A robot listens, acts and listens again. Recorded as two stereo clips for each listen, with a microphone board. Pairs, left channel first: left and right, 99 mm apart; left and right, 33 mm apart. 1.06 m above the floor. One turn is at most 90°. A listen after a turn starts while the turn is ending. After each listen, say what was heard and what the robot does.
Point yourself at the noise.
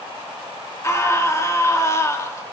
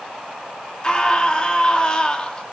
The scream: about 30° left or 150° left. Turn 30° left.
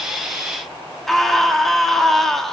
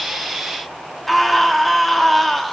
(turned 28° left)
Facing the scream.